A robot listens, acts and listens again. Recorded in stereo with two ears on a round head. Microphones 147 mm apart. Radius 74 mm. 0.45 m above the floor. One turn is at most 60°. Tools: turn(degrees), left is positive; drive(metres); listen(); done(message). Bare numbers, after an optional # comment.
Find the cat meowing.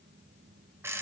listen()
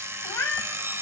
turn(30)
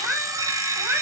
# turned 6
turn(-30)
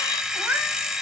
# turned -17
turn(-30)
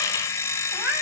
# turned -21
turn(-30)
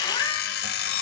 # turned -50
listen()
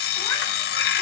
listen()
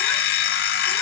done("I heard a cat meowing, but can't make it out now. It was about 40° left or 120° right.")